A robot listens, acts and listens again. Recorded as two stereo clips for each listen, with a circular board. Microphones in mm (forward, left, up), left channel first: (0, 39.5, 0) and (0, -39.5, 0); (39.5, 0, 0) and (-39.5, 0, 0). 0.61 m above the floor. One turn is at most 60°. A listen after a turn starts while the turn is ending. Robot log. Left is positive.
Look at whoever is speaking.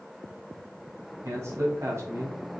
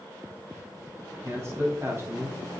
note: The man speaking: 130° right.
cmd yaw -60
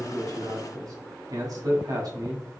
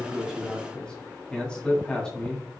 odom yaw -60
note: The man speaking is now 75° right.
cmd yaw -60
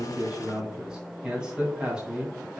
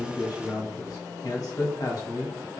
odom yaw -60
note: The man speaking is now 15° right.
cmd yaw -15
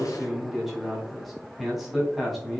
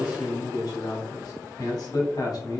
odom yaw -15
end: Facing the man speaking.